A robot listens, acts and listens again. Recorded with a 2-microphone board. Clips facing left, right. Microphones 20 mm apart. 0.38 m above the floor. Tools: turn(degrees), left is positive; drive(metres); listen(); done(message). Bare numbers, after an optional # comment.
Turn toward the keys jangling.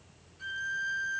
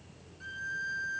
listen()
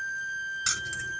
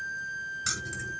# The keys jangling: about 25° left or 155° left.
turn(25)
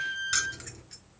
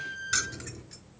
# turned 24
turn(30)
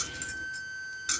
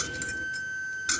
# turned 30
# So it is at 10° right.
turn(-10)
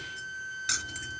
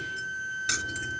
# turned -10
done("Found it: keys jangling, straight ahead.")